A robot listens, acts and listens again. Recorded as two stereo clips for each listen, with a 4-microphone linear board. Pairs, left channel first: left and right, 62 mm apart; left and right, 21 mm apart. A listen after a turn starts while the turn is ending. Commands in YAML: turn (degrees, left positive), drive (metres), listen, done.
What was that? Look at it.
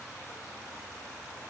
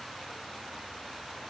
listen: true
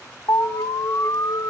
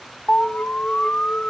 turn: 65
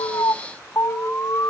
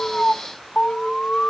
turn: 40
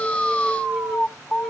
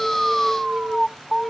done: "Found it: an alarm, straight ahead, 1 to 2 m away."